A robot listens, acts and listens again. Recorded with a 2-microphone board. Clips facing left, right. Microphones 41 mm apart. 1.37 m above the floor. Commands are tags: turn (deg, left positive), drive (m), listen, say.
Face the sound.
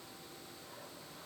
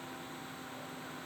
<listen/>
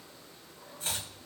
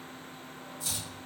<turn deg="40"/>
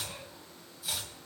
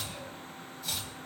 <say>Found it: chopping, straight ahead, 2 to 4 m away.</say>